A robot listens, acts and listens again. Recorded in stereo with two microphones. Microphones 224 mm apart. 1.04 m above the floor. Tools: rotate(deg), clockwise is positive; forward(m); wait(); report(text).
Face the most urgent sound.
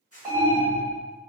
rotate(30)
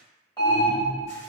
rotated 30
rotate(-20)
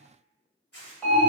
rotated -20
report("Found it: an alarm, straight ahead.")